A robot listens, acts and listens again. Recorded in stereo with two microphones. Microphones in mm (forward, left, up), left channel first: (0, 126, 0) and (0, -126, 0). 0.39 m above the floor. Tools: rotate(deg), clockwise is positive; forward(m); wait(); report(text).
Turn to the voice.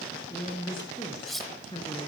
rotate(-20)
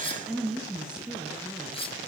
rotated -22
report("Facing the woman speaking, over 4 m away.")